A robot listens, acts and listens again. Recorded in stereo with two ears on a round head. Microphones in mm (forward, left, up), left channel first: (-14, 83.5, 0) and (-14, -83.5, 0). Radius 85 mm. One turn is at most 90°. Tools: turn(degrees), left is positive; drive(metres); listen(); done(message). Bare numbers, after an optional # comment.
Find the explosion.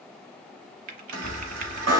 # The explosion: about 40° left or 140° left.
turn(40)
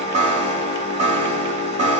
listen()
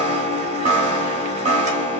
done("I heard an explosion, but can't make it out now. It was about straight ahead or 100° left.")